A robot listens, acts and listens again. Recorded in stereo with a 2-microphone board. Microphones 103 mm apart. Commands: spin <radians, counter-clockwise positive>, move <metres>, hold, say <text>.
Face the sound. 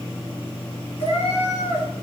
spin 1.57
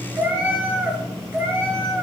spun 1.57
spin -0.44
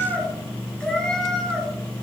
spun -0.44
say Found it: a cat meowing, straight ahead, over 4 m away.